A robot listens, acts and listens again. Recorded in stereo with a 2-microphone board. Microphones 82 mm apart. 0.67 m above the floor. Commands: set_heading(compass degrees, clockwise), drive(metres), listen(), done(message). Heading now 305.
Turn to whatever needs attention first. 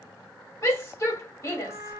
set_heading(265)
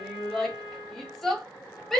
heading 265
done("Facing the shout.")